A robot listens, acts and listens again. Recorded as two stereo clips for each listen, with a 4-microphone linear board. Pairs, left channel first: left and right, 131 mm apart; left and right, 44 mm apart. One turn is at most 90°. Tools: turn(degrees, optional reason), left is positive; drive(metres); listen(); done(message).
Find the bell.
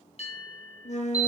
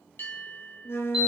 turn(degrees=50, reason="The bell: about 50° left or 130° left.")
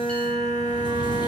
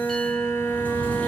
listen()
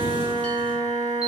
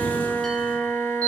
listen()
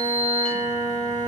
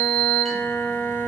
done("I heard a bell, but can't make it out now. It was about straight ahead or 80° left.")